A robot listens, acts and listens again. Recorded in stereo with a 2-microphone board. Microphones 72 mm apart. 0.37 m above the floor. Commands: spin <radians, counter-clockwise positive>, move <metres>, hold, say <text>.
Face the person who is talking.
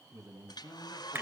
spin -0.96
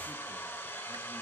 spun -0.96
hold
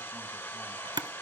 hold
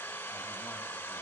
say I heard a man speaking, but can't make it out now. It was about straight ahead or 70° right.